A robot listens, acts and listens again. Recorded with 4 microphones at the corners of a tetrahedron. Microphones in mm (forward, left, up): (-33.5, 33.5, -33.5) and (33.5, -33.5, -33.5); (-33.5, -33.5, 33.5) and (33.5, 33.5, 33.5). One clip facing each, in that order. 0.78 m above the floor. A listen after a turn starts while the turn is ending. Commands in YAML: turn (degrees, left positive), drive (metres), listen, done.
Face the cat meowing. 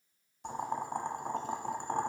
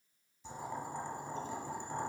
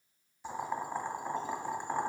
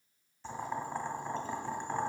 listen: true
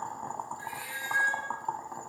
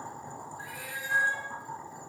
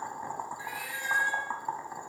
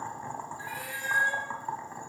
done: "Facing the cat meowing."